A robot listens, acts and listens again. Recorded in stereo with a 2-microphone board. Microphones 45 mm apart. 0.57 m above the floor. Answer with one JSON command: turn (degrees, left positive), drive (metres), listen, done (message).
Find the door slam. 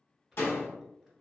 {"turn": 60}
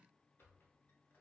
{"listen": true}
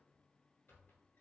{"done": "I heard a door slam, but can't make it out now. It was about straight ahead or 60° left."}